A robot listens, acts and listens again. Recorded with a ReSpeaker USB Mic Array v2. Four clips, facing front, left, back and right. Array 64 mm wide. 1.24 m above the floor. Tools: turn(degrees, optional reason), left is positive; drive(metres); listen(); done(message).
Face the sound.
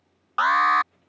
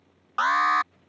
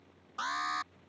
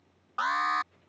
turn(degrees=20, reason="The alarm: 20° left.")
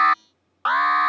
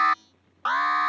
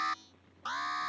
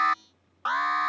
turn(degrees=10, reason="The alarm is now 10° left.")
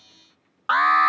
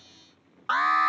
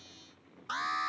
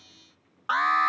done("Facing the alarm.")